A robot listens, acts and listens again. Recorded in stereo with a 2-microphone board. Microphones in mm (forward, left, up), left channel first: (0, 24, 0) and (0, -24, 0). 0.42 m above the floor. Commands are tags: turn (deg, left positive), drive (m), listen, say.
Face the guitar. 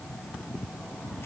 <listen/>
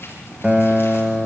<turn deg="-20"/>
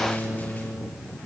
<turn deg="-135"/>
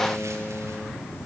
<turn deg="-10"/>
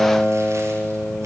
<say>Facing the guitar, 2 to 4 m away.</say>